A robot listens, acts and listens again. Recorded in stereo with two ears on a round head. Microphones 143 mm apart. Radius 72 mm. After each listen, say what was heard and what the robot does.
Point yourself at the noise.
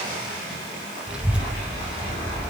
Turn 30° right.
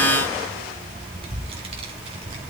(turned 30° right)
So it is at 145° right. Turn 145° right.
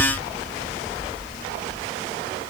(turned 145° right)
The child speaking is now 15° left. Turn 15° left.
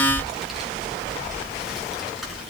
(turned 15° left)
Found it: a child speaking, straight ahead, over 4 m away.